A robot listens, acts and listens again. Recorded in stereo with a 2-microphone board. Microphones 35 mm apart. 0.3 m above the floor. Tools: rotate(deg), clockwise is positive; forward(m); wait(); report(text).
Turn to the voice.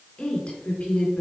rotate(-30)
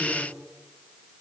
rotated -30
wait()
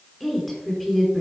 report("Facing the woman speaking.")